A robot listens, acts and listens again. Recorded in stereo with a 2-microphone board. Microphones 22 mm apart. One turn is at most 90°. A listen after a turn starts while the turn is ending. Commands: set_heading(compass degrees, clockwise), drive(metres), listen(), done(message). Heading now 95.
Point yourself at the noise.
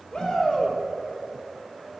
set_heading(40)
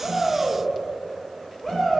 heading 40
done("Found it: a shout, straight ahead.")